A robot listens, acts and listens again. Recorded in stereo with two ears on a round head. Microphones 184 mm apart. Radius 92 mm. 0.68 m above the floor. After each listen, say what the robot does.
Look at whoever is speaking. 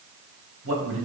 Turn 70° right.
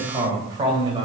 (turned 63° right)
Turn 25° right.
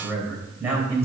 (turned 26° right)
Turn 15° right.
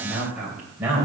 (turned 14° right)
Turn 10° right.
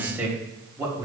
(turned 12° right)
Turn 15° right.
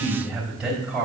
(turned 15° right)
Found it: a man speaking, straight ahead, 2 to 4 m away.